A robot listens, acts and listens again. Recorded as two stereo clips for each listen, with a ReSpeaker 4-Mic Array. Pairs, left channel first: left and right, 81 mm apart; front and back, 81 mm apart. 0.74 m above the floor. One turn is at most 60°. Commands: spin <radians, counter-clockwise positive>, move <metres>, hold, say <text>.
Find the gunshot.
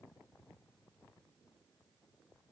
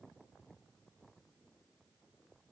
hold
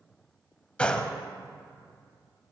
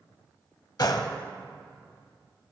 spin 0.26
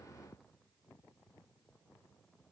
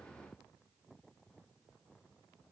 say Facing where the gunshot came from. I can't hear it now.